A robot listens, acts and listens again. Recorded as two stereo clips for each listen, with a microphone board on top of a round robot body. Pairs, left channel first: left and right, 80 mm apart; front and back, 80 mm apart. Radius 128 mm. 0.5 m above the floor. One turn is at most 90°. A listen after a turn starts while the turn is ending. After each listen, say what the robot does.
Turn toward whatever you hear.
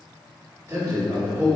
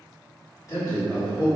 Turn 25° right.
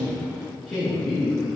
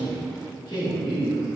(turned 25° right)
Turn 25° left.
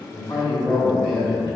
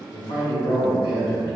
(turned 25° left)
Turn 10° left.
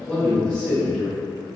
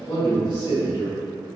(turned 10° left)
Turn 10° left.
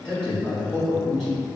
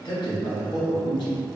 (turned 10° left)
Facing the man speaking.